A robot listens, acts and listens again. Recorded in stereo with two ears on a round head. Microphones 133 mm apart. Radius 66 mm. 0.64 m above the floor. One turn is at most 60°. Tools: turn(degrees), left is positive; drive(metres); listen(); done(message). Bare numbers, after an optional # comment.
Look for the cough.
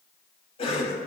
# The cough: about 40° left or 140° left.
turn(40)
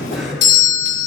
listen()
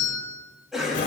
done("Facing the cough, over 4 m away.")